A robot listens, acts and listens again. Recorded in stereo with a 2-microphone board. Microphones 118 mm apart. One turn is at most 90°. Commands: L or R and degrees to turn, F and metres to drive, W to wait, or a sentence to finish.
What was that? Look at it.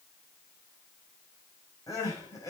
L30
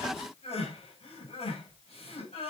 L90
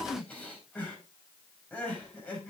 L10
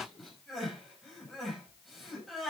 Found it: crying, straight ahead.